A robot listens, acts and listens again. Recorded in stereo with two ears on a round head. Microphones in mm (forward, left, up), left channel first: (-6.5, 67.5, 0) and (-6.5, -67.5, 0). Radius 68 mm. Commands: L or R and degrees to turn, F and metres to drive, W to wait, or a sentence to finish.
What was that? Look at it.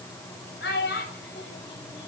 L90
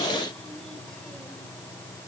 W
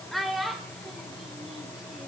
Found it: a child speaking, straight ahead.